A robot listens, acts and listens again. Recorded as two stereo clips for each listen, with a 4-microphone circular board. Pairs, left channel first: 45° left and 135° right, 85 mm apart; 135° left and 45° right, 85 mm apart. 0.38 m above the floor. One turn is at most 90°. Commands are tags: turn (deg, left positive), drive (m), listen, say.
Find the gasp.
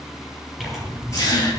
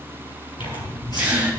<turn deg="25"/>
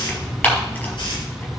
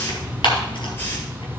<say>I heard a gasp from this way, but can't make it out now.</say>